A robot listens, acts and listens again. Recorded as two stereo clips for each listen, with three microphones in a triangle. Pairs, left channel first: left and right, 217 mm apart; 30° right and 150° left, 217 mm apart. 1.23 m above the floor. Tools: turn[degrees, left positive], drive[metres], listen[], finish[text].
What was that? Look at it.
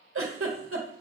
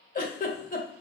Thought: The giggle: 80° right.
Action: turn[-80]
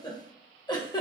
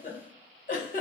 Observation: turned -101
Thought: The giggle is now 20° left.
Action: turn[20]
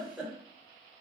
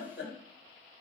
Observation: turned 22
Action: finish[Found it: a giggle, straight ahead.]